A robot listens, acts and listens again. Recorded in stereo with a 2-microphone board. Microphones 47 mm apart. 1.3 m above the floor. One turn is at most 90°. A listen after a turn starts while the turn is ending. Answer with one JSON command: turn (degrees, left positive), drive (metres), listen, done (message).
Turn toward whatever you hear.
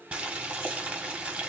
{"turn": -25}
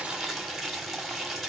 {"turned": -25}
{"done": "Facing the boiling."}